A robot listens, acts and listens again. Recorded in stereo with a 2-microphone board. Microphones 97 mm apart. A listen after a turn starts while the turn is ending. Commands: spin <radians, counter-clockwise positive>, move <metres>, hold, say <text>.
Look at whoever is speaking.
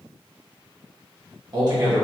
spin -0.79
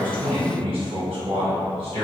spin -1.48
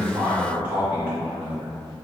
spin -0.35
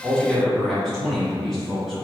say Found it: a man speaking, straight ahead.